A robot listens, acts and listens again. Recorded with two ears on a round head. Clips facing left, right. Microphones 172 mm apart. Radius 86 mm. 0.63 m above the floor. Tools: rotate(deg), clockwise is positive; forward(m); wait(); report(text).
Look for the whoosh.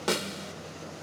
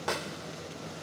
wait()
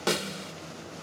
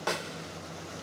wait()
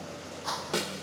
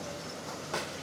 rotate(-90)
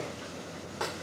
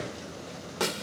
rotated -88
wait()
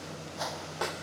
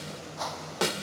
rotate(-10)
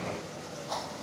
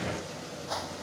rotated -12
report("Found it: a whoosh, straight ahead.")